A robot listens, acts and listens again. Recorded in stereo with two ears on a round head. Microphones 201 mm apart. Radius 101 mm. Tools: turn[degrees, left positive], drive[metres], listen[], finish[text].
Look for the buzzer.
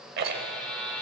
Action: turn[30]
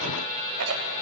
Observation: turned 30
Thought: So it is at 145° left.
Action: turn[145]
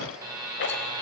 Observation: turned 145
Thought: The buzzer is now 15° right.
Action: turn[-15]
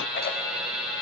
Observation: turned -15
Action: finish[Facing the buzzer.]